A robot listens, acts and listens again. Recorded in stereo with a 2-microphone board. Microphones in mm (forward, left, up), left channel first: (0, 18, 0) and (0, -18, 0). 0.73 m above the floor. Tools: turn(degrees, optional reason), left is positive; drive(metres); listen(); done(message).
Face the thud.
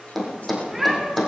turn(degrees=30)
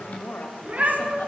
listen()
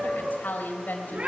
done("I heard a thud, but can't make it out now. It was about 25° right or 145° left.")